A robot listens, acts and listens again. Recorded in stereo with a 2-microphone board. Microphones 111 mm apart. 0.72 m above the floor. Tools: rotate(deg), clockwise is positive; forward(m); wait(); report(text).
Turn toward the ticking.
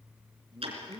rotate(60)
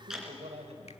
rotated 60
report("Facing the ticking.")